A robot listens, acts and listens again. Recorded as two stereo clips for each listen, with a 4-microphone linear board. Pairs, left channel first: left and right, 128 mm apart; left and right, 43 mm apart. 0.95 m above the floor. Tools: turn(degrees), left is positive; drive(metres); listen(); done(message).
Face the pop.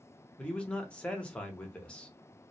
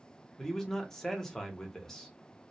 listen()
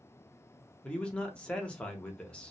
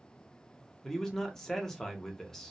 listen()
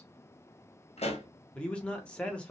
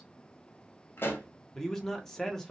turn(degrees=60)
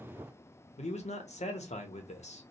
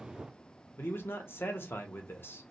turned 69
listen()
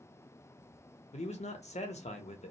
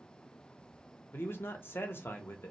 done("I heard a pop, but can't make it out now. It was about 5° right or 50° left.")